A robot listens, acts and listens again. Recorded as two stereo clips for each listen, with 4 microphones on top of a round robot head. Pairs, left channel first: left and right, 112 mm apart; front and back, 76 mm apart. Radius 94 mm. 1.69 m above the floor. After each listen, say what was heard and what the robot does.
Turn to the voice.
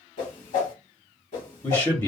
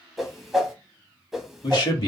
The man speaking: 20° left. Turn 20° left.
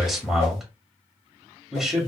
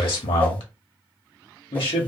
Facing the man speaking.